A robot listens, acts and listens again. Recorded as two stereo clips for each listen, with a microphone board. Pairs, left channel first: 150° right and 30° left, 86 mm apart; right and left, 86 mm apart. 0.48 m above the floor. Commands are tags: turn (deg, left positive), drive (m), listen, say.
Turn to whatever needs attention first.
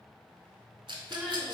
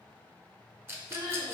<turn deg="120"/>
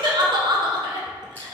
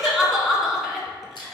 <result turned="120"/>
<say>Found it: crying, straight ahead.</say>